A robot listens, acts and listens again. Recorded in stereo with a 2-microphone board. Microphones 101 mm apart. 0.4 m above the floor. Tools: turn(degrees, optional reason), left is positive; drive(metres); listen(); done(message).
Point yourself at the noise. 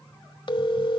turn(degrees=55, reason="The phone ringing: about 55° left or 125° left.")
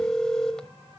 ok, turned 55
done("Found it: a phone ringing, straight ahead, 1 to 2 m away.")